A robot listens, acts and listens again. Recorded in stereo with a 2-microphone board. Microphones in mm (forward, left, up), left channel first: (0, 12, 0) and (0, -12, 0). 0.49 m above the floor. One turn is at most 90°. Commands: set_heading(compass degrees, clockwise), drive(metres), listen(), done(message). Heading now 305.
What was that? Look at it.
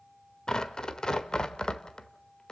set_heading(270)
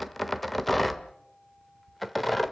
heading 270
done("Found it: tearing paper, straight ahead.")